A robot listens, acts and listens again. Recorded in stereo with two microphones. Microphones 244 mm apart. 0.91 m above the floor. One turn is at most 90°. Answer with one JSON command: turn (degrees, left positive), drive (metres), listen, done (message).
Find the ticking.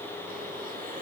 {"listen": true}
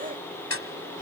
{"turn": 65}
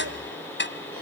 {"turn": 50}
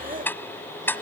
{"turn": 10}
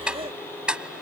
{"done": "Facing the ticking."}